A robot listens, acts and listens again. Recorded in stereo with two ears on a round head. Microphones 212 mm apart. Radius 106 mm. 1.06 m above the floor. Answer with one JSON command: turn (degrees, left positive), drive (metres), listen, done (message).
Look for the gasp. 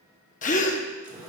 {"turn": 35}
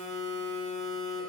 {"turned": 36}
{"listen": true}
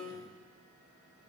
{"done": "I heard a gasp, but can't make it out now. It was about straight ahead or 110° left."}